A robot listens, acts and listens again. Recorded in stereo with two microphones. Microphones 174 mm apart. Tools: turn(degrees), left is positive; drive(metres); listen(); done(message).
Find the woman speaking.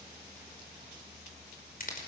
listen()
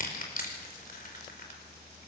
listen()
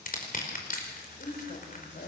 turn(degrees=70)
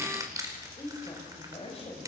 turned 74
turn(degrees=35)
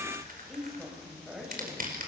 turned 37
done("Facing the woman speaking.")